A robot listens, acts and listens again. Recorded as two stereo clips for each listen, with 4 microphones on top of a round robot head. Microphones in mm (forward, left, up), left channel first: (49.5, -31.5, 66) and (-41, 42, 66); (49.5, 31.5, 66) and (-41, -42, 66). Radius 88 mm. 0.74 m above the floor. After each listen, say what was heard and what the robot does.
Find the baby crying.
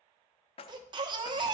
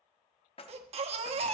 The baby crying: 170° right. Turn 170° right.
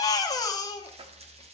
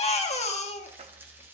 The baby crying is now 20° left. Turn 20° left.
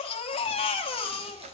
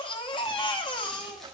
Facing the baby crying.